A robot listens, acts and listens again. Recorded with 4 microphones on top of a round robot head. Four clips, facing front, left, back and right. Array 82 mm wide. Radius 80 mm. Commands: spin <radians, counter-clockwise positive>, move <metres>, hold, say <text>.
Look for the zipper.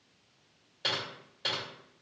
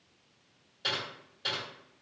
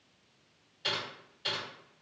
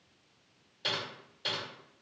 hold
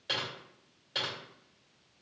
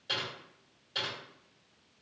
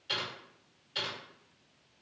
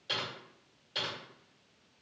hold
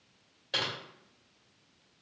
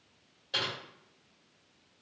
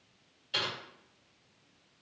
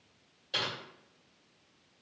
say I can't make out a zipper, only typing on a keyboard.